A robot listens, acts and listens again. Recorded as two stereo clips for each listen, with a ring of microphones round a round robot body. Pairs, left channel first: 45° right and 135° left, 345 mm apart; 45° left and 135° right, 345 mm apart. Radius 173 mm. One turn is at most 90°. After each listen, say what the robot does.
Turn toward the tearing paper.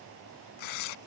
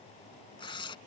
Turn 35° right.
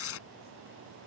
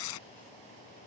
Turn 10° left.
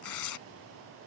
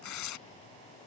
Found it: tearing paper, straight ahead.